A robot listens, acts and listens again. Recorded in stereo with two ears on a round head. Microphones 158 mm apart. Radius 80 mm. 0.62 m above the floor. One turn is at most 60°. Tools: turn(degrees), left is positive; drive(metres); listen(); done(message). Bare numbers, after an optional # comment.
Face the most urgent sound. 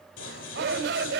# The shout: about 65° right or 115° right.
turn(-60)
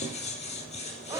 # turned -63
# So it is at 20° right.
turn(-20)
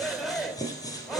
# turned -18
done("Facing the shout, 2 to 4 m away.")